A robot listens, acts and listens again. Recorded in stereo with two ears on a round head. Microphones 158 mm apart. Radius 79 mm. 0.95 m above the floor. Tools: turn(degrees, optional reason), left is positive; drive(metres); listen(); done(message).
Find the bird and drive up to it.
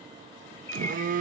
turn(degrees=30)
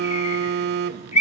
turn(degrees=135, reason="So it is at 135° left.")
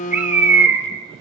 turn(degrees=-10, reason="The bird is now 10° right.")
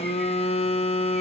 listen()
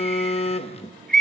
drive(metres=1.0)
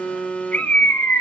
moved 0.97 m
turn(degrees=10, reason="The bird is now 10° left.")
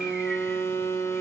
listen()
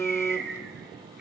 listen()
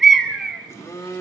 drive(metres=1.0)
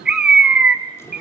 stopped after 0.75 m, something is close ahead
done("Arrived at the bird, straight ahead.")